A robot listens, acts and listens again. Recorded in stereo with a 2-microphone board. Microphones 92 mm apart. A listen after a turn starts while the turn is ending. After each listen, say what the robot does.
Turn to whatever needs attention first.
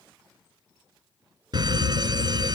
Turn 45° right.
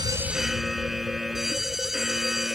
Found it: a fire alarm, straight ahead.